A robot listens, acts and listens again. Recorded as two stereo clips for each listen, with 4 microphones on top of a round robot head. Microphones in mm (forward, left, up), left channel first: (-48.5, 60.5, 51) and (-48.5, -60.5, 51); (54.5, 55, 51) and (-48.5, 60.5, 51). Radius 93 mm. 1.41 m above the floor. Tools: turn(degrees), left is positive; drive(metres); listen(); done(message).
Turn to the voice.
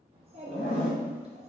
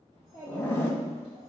turn(degrees=-120)
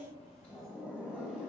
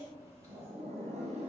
done("Found it: a child speaking, straight ahead.")